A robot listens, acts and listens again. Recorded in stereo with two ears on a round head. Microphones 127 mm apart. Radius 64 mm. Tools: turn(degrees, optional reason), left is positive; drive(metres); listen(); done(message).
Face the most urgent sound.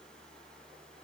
listen()
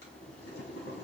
listen()
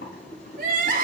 turn(degrees=-60, reason="The crying: about 60° right or 120° right.")
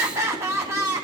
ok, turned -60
turn(degrees=-20, reason="So it is at 20° right.")
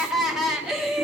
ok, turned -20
done("Found it: crying, straight ahead, 1 to 2 m away.")